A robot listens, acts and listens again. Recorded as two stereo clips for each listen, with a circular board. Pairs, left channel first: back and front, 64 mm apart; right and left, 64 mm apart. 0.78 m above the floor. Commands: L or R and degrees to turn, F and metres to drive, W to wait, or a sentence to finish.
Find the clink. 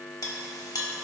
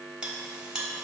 L165
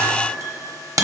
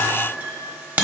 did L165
L30
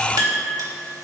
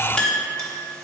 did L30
R10
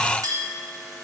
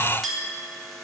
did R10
Found it: a clink, straight ahead.